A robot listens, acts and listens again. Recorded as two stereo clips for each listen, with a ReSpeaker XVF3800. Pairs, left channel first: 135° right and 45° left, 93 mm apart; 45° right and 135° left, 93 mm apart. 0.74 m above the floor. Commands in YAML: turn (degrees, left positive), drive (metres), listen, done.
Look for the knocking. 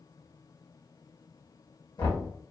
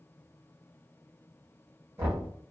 turn: -165
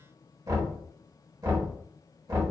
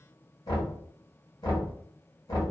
done: "Found it: knocking, straight ahead, 1 to 2 m away."